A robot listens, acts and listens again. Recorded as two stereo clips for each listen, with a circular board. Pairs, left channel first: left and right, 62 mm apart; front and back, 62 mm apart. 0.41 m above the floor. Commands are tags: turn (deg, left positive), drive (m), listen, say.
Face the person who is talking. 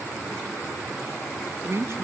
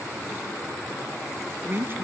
<turn deg="-130"/>
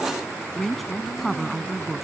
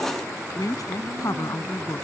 <say>Facing the woman speaking.</say>